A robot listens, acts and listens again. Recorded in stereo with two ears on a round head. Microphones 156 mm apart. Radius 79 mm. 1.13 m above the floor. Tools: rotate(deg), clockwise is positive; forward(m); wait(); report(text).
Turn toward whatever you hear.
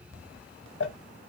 rotate(-90)
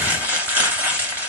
rotate(10)
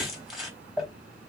report("Found it: crumpling, straight ahead, 1 to 2 m away.")